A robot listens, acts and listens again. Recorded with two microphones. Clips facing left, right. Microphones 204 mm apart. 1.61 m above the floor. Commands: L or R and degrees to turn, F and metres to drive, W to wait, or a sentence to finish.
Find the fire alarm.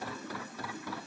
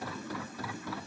W
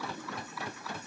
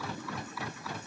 W
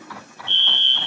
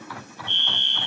R30
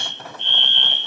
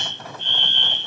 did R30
R135
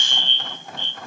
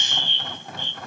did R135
R10
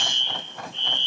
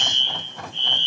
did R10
Found it: a fire alarm, straight ahead, 2 to 4 m away.